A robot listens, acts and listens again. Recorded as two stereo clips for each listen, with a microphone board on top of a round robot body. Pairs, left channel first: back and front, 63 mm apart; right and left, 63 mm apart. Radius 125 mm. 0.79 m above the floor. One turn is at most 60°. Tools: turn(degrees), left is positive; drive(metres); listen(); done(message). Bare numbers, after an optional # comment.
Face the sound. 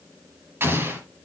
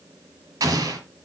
# The explosion: 55° left.
turn(55)
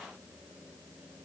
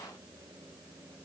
done("I heard an explosion from this way, but can't make it out now.")